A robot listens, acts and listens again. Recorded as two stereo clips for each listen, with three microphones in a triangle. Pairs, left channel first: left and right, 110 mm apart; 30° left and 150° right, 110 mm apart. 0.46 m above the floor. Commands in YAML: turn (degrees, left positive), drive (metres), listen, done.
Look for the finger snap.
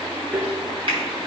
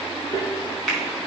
turn: -55
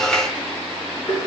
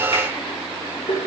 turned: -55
listen: true
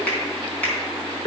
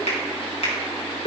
turn: 15
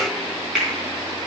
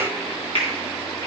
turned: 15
done: "Facing the finger snap."